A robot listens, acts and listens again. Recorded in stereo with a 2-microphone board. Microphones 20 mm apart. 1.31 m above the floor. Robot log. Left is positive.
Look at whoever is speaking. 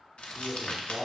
cmd yaw -30
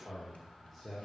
note: So it is at 15° left.
cmd yaw +15
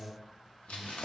end: Found it: a man speaking, straight ahead.